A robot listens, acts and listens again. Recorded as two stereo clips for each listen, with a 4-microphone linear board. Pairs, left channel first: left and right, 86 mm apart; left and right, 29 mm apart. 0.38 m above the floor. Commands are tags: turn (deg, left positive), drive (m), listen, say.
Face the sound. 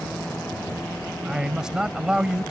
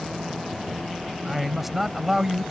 <turn deg="-30"/>
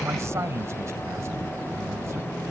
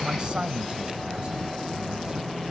<turn deg="-140"/>
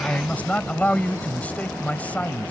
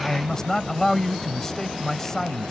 <turn deg="20"/>
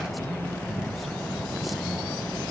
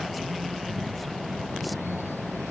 <listen/>
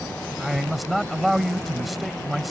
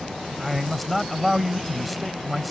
<say>Found it: a man speaking, straight ahead.</say>